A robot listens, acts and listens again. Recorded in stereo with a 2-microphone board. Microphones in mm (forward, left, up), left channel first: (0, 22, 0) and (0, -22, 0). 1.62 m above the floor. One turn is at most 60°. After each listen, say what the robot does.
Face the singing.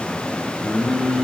Turn 25° right.
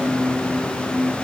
Turn 60° right.
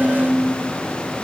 Turn 55° right.
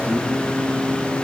Facing the singing, 2 to 4 m away.